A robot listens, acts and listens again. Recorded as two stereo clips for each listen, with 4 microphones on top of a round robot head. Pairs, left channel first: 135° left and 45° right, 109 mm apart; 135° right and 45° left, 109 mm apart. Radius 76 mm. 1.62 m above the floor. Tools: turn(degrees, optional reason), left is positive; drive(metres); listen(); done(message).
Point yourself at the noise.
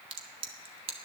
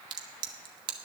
done("Facing the crack, 1 to 2 m away.")